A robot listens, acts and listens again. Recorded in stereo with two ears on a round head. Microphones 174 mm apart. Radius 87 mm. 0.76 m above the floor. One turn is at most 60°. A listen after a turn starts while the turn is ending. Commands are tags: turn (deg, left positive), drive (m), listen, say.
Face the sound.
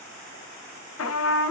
<turn deg="60"/>
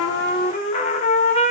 <turn deg="35"/>
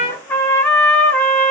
<turn deg="10"/>
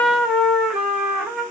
<say>Facing the trumpet.</say>